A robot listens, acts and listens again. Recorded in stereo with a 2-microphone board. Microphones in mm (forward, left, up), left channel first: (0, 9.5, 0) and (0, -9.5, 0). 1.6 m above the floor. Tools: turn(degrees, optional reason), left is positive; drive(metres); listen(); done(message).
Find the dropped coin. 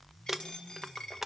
turn(degrees=60, reason="The dropped coin: about 60° left or 120° left.")
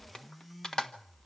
listen()
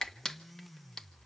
done("I heard a dropped coin, but can't make it out now. It was about straight ahead or 60° left.")